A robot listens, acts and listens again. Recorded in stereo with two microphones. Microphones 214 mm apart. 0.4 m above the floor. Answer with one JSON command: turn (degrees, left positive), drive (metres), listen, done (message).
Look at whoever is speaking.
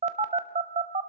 {"listen": true}
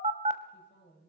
{"turn": 55}
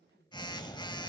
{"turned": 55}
{"turn": 25}
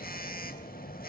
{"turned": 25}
{"listen": true}
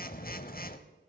{"listen": true}
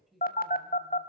{"done": "Facing the woman speaking, 2 to 4 m away."}